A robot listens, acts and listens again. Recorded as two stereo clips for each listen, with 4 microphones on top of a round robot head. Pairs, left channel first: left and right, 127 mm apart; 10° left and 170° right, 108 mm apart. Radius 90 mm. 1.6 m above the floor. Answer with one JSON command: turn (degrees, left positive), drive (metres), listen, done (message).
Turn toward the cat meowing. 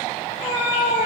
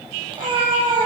{"turn": 165}
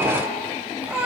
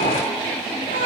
{"turn": -15}
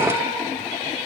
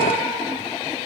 {"listen": true}
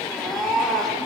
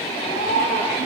{"done": "Found it: a cat meowing, straight ahead."}